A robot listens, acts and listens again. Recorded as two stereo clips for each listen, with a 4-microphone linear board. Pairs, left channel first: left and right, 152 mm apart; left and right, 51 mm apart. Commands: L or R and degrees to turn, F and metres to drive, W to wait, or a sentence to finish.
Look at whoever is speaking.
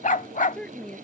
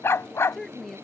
L30
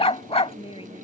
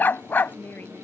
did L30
L140
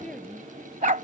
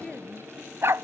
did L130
Facing the woman speaking.